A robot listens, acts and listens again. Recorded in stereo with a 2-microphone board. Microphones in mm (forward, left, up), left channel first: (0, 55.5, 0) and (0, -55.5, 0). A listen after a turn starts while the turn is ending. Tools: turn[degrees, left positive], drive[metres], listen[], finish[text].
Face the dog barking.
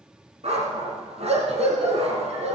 Thought: The dog barking: about 65° right or 115° right.
Action: turn[-65]
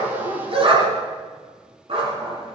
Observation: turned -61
Thought: So it is at 50° right.
Action: turn[-50]
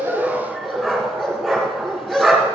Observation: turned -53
Action: finish[Facing the dog barking.]